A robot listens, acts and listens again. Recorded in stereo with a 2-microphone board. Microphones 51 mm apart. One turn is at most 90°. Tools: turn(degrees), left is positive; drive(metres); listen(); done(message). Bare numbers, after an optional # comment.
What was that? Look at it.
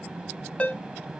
# The ringtone: about 25° left or 155° left.
turn(25)
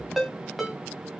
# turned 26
done("Found it: a ringtone, straight ahead.")